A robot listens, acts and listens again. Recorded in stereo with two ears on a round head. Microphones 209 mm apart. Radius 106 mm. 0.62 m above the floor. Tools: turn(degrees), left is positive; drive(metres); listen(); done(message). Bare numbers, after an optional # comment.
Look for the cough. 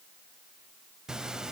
listen()
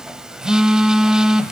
listen()
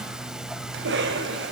# The cough: about 55° right or 125° right.
turn(-55)
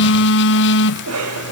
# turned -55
# So it is at 70° right.
turn(-70)
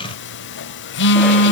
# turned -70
listen()
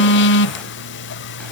listen()
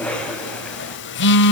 done("Found it: a cough, straight ahead.")